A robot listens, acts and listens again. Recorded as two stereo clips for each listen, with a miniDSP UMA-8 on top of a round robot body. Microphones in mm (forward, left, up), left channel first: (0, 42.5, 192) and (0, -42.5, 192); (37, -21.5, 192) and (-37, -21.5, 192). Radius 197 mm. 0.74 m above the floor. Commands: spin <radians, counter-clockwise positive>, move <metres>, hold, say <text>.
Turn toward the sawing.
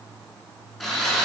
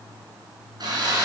spin 3.05
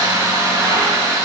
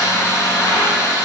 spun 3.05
spin -0.79
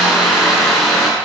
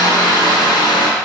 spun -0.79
say Found it: sawing, straight ahead, 2 to 4 m away.